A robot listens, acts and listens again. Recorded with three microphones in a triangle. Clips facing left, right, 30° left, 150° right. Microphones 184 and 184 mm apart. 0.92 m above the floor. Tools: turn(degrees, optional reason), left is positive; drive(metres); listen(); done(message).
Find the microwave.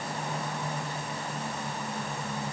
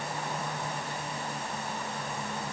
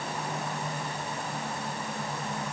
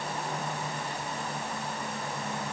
listen()
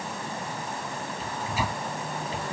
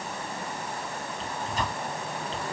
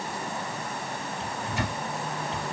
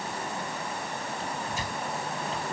turn(degrees=10, reason="The microwave: 10° left.")
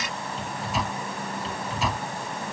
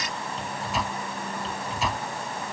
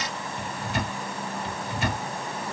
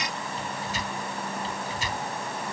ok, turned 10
done("Facing the microwave.")